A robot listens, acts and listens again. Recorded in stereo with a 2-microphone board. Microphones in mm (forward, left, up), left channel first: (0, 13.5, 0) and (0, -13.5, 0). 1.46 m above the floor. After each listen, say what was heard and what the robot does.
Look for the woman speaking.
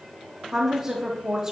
The woman speaking: about 20° right or 160° right. Turn 20° right.
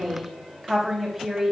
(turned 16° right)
Facing the woman speaking, 2 to 4 m away.